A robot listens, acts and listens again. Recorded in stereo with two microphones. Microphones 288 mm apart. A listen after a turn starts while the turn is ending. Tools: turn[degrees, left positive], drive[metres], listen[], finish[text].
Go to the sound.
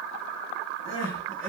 Thought: The crying: about 45° right or 135° right.
Action: turn[-45]
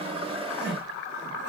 Action: drive[1.0]
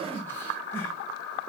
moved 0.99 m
Action: listen[]
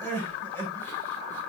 Thought: The crying is now 10° left.
Action: turn[10]
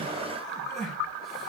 Action: drive[1.0]
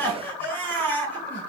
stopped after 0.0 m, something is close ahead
Action: finish[I am next to the crying.]